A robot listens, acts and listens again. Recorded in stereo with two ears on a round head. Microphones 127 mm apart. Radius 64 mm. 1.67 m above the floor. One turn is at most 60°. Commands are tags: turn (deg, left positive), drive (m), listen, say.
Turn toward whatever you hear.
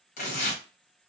<turn deg="60"/>
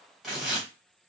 <say>Found it: tearing paper, straight ahead.</say>